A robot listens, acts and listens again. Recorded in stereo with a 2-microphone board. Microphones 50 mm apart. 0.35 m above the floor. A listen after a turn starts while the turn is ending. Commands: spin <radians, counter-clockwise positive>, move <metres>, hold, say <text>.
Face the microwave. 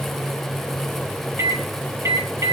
spin -1.57
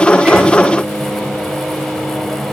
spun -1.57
say Found it: a microwave, straight ahead, over 4 m away.